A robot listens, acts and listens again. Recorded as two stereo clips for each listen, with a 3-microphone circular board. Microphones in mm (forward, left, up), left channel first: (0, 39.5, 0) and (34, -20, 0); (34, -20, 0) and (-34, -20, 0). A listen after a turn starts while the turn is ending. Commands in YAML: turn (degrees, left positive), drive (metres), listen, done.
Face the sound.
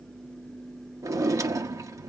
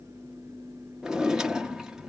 turn: -100
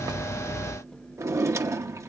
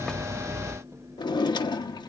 turn: -10
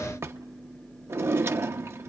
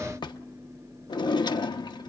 done: "Found it: a drawer, straight ahead."